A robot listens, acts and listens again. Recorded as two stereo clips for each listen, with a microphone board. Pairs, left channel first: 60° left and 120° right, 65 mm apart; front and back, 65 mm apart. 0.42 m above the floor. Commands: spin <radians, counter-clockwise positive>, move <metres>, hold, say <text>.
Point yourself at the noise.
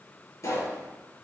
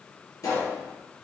spin 0.44
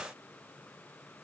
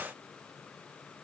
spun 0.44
say I heard a pop from this way, but can't make it out now.